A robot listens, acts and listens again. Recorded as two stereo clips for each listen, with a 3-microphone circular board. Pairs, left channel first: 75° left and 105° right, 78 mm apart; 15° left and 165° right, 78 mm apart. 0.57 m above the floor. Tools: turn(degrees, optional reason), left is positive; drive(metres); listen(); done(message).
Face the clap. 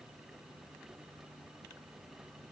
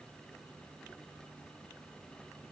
listen()
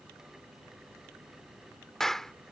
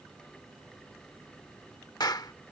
turn(degrees=-10, reason="The clap: 10° right.")
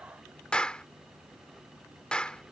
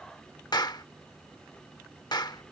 done("Facing the clap.")